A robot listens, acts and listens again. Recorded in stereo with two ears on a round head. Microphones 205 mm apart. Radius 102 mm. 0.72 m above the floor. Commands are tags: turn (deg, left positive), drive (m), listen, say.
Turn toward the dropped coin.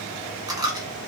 <turn deg="-15"/>
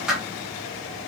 <say>Found it: a dropped coin, straight ahead.</say>